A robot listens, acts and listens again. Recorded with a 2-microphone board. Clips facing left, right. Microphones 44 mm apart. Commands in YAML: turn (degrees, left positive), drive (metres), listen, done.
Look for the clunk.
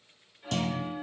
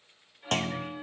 turn: -55
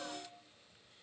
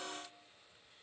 listen: true
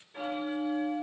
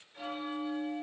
done: "I heard a clunk, but can't make it out now. It was about straight ahead or 70° right."